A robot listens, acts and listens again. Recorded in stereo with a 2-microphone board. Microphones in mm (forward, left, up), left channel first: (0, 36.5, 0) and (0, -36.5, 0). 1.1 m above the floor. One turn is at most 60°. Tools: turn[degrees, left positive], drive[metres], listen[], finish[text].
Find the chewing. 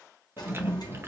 Thought: The chewing: about 35° right or 145° right.
Action: turn[-35]
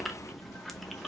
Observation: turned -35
Action: finish[Facing the chewing, under 1 m away.]